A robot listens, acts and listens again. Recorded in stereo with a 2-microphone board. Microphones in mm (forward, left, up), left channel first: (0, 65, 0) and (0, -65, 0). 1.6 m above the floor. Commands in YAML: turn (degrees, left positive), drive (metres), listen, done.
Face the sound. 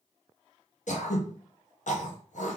turn: 70
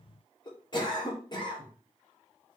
turn: 35
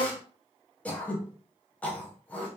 turn: 10
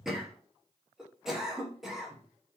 done: "Facing the throat clearing, under 1 m away."